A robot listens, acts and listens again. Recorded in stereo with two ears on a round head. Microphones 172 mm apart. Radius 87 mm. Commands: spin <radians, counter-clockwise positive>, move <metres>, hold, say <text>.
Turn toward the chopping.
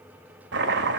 spin -1.13
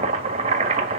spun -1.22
spin -0.61
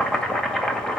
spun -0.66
say Facing the chopping.